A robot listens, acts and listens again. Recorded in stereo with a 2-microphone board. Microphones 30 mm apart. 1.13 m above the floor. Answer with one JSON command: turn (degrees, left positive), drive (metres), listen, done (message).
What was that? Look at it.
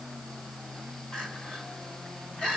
{"turn": 40}
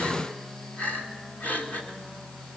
{"turn": 100}
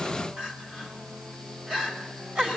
{"turn": -35}
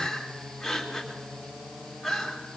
{"turn": 10}
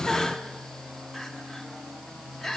{"done": "Found it: crying, straight ahead, 2 to 4 m away."}